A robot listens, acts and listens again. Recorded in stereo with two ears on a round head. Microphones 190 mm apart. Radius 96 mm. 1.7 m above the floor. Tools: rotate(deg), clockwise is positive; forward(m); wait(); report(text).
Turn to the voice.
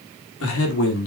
rotate(-65)
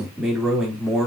report("Facing the man speaking.")